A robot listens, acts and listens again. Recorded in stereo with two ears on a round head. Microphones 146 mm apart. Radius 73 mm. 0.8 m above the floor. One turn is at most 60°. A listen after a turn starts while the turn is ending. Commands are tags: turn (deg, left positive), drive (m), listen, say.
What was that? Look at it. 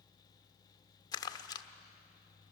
<turn deg="25"/>
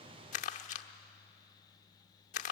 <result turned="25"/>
<turn deg="60"/>
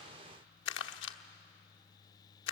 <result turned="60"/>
<turn deg="60"/>
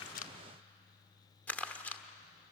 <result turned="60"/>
<turn deg="10"/>
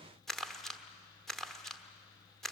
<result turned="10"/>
<say>Facing the crumpling.</say>